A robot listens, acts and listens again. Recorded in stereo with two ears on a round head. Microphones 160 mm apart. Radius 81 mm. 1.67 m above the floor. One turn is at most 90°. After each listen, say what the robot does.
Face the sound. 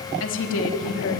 Turn 90° left.
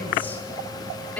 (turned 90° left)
Turn 10° left.
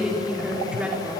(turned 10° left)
Facing the woman speaking, over 4 m away.